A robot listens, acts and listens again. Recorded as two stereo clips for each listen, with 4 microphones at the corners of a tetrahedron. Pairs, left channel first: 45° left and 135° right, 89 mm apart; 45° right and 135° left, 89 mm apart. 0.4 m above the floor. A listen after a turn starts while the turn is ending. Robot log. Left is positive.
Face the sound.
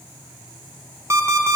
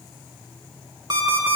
note: The alarm clock: 170° left.
cmd yaw +170
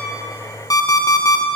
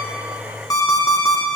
end: Found it: an alarm clock, straight ahead, 2 to 4 m away.